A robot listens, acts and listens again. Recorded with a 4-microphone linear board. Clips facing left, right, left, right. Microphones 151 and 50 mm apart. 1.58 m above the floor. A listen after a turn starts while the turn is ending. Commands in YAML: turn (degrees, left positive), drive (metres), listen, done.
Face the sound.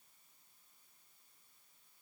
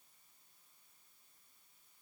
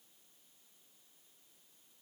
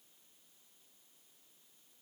listen: true
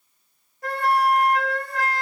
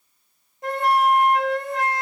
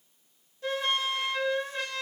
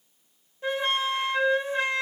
turn: -20
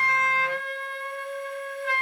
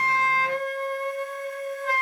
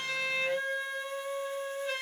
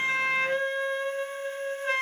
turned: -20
turn: -140
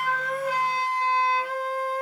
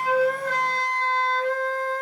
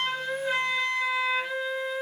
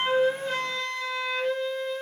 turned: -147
turn: 10
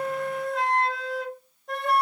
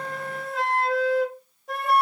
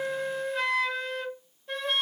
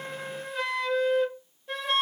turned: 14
done: "Facing the flute."